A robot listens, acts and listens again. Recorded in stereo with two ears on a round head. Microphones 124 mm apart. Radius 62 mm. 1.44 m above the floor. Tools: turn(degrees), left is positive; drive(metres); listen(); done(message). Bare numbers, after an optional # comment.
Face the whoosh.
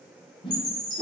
# The whoosh: about 35° left or 145° left.
turn(35)
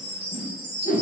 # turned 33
# So it is at 110° left.
turn(110)
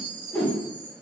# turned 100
# The whoosh is now 10° left.
turn(10)
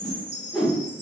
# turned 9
done("Found it: a whoosh, straight ahead, 1 to 2 m away.")